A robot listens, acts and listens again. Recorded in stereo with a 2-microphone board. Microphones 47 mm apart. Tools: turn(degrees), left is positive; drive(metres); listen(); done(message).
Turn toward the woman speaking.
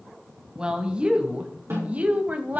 turn(degrees=-35)
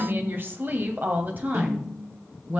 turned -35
turn(degrees=-35)
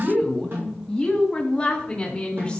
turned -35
turn(degrees=10)
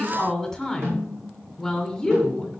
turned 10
done("Facing the woman speaking.")